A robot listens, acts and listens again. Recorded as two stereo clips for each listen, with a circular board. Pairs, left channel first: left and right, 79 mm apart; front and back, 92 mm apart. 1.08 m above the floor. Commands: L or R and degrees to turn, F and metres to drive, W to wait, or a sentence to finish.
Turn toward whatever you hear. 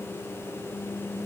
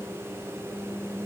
W
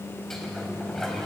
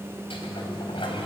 Facing the sliding door.